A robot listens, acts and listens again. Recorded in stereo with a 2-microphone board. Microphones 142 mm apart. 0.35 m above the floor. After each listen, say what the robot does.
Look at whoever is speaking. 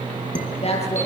Turn 50° left.
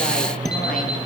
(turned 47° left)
Keep listening.
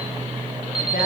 Keep listening.
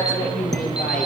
Turn 80° left.
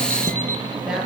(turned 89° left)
Facing the woman speaking, over 4 m away.